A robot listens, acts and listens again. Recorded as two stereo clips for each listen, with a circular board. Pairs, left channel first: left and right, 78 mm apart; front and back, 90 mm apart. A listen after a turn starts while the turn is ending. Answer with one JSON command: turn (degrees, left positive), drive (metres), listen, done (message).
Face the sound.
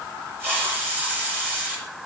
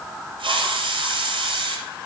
{"turn": -155}
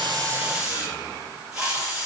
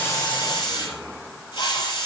{"turn": -10}
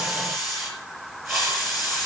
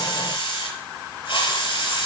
{"done": "Facing the hiss, over 4 m away."}